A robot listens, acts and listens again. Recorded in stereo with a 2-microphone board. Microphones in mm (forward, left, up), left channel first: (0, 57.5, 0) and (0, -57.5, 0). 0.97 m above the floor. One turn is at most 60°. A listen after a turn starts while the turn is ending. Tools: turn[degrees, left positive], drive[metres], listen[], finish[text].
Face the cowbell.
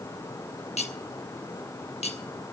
Action: listen[]
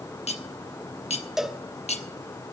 Action: turn[-30]
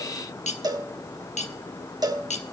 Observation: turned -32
Thought: So it is at 145° right.
Action: turn[-60]
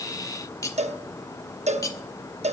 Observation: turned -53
Thought: The cowbell is now 90° right.
Action: turn[-60]
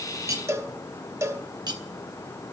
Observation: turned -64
Thought: The cowbell is now 25° right.
Action: turn[-25]
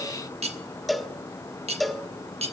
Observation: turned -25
Action: finish[Facing the cowbell.]